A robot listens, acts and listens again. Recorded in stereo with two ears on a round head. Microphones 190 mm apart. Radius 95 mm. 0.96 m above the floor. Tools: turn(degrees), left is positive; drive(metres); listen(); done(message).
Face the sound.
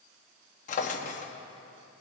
turn(degrees=35)
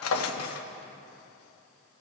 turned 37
turn(degrees=110)
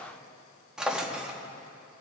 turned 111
done("Found it: a drawer, straight ahead, under 1 m away.")